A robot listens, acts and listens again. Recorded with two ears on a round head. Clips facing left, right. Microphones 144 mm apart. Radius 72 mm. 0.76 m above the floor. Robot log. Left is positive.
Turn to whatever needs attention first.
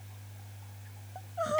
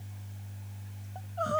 cmd yaw +30
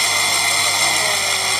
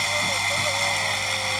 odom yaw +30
cmd idle
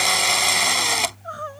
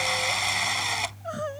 note: So it is at 25° right.
cmd yaw -25
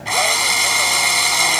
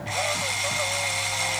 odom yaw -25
cmd idle
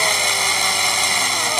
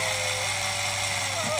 cmd idle
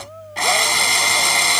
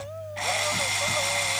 end: I heard crying from this way, but can't make it out now.